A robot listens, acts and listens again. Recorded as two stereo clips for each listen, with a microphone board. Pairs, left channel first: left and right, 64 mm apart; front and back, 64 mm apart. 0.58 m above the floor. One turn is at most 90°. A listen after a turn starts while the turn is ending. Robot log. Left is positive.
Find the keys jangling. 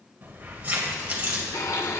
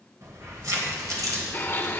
note: The keys jangling: 155° right.
cmd yaw -90
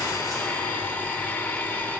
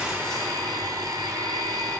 note: Nothing new. It was at 65° right.
cmd yaw -65
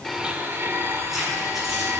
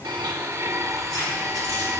end: Found it: keys jangling, straight ahead, over 4 m away.